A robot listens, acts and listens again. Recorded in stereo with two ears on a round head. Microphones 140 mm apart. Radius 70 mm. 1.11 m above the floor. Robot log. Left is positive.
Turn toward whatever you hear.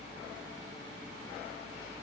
cmd idle
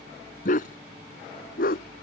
note: The dog barking: about 60° left or 120° left.
cmd yaw +60
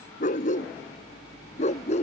note: So it is at 45° left.
cmd yaw +45
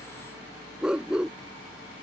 end: Found it: a dog barking, straight ahead.